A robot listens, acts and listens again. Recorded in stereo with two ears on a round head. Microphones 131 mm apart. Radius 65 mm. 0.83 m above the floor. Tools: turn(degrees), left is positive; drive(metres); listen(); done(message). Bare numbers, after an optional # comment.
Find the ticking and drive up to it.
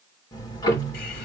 # The ticking: about 30° left or 150° left.
turn(30)
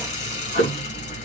# So it is at 120° left.
turn(120)
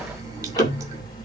# The ticking is now 30° left.
turn(30)
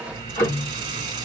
# The ticking is now 20° left.
turn(20)
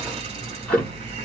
# The ticking is now 10° left.
turn(10)
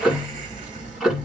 drive(1.0)
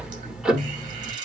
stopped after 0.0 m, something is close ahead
done("Something is in my way. I am facing the ticking but have not reached it.")